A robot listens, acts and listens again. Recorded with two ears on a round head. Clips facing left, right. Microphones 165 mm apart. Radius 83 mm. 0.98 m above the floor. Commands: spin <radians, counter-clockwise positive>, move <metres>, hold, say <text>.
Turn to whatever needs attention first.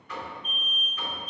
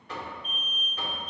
spin 1.31
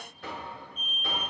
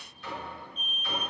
spin 0.17
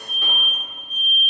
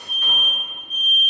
say Facing the alarm, 2 to 4 m away.